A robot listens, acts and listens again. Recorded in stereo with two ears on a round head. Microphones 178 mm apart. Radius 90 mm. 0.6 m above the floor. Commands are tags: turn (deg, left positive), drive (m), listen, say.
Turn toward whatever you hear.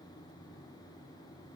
<listen/>
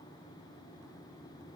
<listen/>
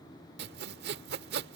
<turn deg="-55"/>
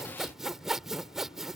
<say>Facing the sawing.</say>